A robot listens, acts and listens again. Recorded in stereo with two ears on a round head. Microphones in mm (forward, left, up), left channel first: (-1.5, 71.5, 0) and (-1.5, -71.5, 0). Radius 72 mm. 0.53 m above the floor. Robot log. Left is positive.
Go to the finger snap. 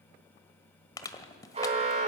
cmd idle
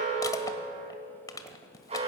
cmd idle
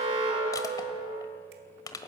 end: I can't make out a finger snap, only an alarm and crushing.